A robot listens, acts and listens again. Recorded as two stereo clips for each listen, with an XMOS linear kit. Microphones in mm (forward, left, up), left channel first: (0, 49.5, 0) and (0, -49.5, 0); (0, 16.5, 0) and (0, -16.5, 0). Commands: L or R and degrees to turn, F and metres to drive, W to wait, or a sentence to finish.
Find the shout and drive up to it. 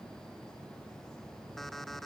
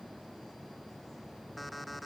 W
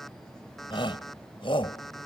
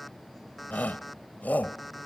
L60
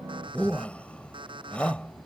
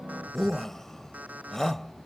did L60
L15
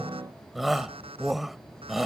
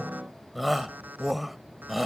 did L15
F1.0
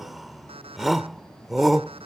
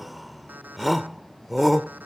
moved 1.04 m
F1.0
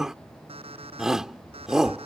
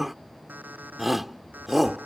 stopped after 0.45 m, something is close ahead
R10
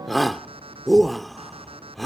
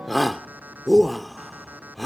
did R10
I am next to the shout.